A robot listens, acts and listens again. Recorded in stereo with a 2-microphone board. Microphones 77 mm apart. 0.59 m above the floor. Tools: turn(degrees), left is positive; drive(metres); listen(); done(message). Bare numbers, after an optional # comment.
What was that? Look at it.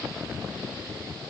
listen()
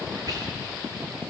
# The whispering: about 55° right or 125° right.
turn(-55)
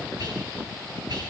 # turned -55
# So it is at 65° right.
turn(-65)
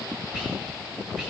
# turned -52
# The whispering is now 15° right.
turn(-15)
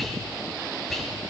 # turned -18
done("Facing the whispering, 2 to 4 m away.")